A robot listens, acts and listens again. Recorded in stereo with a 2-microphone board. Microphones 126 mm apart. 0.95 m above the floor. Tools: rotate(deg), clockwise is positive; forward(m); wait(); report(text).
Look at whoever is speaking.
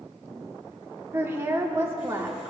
rotate(20)
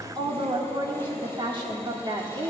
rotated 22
rotate(140)
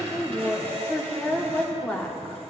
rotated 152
rotate(-10)
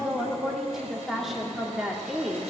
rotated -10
report("Found it: a woman speaking, straight ahead, 1 to 2 m away.")